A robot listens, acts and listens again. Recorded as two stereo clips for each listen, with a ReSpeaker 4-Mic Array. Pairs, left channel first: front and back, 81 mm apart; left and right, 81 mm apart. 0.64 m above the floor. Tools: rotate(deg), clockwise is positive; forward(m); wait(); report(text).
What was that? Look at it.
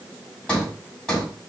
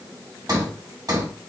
rotate(80)
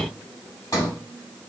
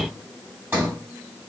rotate(35)
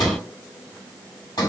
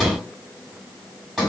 report("Found it: a sliding door, straight ahead.")